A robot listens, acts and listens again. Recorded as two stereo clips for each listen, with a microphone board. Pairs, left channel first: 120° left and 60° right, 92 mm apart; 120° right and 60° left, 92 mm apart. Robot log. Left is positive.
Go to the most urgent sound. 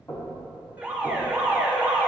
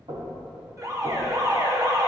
note: The alarm: 10° left.
cmd yaw +10
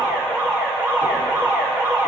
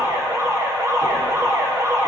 cmd fwd 1.0
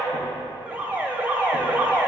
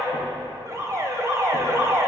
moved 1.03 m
note: The alarm is now 10° left.
cmd yaw +10
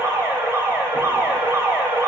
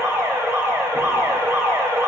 cmd fwd 1.0
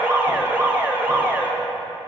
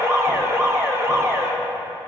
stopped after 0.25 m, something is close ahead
end: I am next to the alarm.